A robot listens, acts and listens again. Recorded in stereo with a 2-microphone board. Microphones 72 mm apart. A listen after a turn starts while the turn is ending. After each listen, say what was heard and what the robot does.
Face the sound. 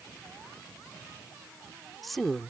Turn 30° left.
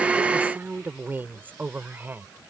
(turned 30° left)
So it is at 30° right. Turn 30° right.
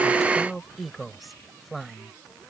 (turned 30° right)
Facing the woman speaking.